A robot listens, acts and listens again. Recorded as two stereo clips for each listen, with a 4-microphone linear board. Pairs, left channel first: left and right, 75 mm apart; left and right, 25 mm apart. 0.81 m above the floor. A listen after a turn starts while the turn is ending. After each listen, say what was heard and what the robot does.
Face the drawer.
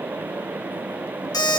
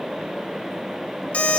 Keep listening.
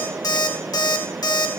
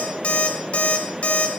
Keep listening.
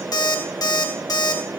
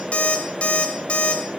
I can't make out a drawer to turn to.